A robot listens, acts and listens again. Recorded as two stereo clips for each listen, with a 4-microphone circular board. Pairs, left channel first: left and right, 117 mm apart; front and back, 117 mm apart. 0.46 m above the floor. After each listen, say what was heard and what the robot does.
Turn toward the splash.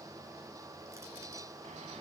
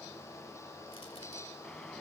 Keep listening.
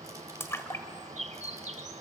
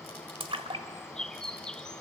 The splash: 155° left. Turn 155° left.
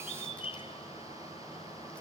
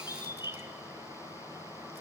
Facing where the splash came from. I can't hear it now.